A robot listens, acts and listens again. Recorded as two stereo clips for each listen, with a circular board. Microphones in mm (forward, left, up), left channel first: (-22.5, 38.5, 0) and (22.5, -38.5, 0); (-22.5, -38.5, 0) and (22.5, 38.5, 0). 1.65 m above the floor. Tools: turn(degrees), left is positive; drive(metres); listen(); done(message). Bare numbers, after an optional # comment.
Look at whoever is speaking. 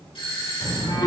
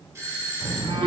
# The child speaking: 75° right.
turn(-75)
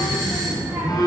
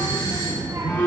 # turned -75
# The child speaking is now 20° left.
turn(20)
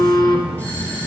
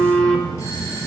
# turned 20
# The child speaking is now 20° left.
turn(20)
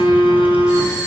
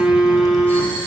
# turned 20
listen()
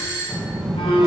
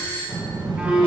# The child speaking is now 30° left.
turn(30)
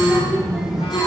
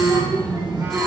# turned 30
# The child speaking is now 25° left.
turn(25)
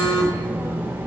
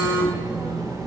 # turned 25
# The child speaking is now 10° left.
turn(10)
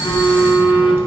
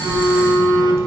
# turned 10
done("Found it: a child speaking, straight ahead.")